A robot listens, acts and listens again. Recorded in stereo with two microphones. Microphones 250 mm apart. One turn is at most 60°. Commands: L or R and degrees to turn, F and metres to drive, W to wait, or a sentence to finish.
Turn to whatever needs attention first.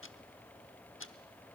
W
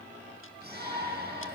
R40
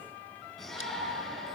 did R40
Facing the shout, over 4 m away.